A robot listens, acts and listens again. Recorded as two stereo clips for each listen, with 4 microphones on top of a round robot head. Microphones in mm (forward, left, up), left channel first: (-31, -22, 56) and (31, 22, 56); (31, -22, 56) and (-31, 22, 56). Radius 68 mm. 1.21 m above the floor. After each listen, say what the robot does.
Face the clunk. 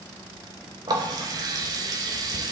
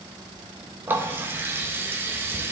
Keep listening.
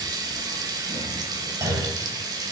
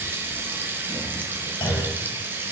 Turn 10° right.
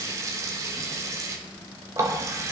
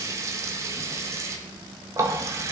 I heard a clunk from this way, but can't make it out now.